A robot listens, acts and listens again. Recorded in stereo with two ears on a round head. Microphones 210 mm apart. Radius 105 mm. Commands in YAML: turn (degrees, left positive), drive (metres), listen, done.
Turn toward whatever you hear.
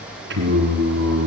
turn: -45
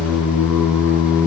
turn: 10
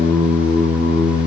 turn: 15
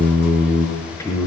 turn: 15
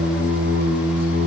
done: "Facing the singing, over 4 m away."